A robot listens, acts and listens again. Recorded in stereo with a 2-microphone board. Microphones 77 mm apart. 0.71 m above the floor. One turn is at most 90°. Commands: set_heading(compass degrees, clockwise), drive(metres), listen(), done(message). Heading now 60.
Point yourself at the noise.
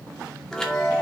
set_heading(30)
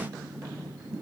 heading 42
listen()
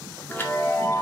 set_heading(312)
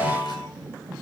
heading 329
set_heading(249)
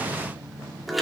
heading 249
done("Found it: a chime, straight ahead.")